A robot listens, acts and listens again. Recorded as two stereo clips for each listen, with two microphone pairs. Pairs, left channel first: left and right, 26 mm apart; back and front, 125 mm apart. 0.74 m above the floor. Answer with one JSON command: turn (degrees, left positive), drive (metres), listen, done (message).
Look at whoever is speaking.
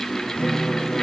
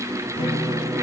{"listen": true}
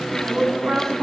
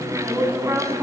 {"turn": -75}
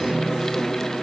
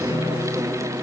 {"listen": true}
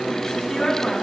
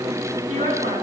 {"turn": 20}
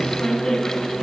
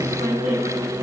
{"listen": true}
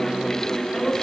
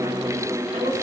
{"listen": true}
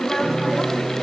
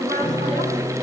{"done": "I heard a woman speaking from this way, but can't make it out now."}